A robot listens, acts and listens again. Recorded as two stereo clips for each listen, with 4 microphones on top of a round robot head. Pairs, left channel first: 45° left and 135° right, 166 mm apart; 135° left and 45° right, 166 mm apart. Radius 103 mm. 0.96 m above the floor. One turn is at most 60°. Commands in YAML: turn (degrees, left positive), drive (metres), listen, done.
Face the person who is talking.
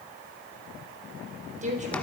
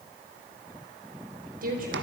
turn: -60
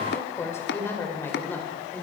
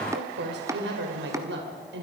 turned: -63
turn: -35
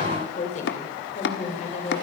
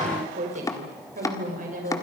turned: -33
done: "Facing the woman speaking."